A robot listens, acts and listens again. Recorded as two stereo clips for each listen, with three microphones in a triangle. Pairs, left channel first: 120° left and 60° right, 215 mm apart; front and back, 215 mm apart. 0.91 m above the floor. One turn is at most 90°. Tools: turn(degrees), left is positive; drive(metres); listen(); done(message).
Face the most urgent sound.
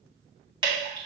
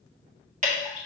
listen()
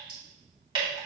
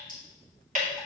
listen()
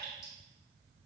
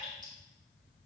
done("I can't make out anything urgent to turn to.")